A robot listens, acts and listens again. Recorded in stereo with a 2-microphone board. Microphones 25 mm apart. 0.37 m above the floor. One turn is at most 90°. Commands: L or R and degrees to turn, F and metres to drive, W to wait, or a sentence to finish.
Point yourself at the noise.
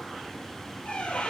L65
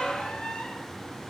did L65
L50
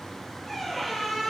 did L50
Facing the squeak.